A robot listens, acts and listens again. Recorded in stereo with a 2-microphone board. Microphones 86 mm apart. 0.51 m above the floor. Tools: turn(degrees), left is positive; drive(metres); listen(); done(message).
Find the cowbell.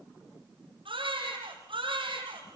listen()
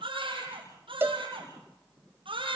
turn(degrees=-25)
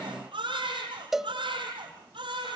done("Facing the cowbell, 1 to 2 m away.")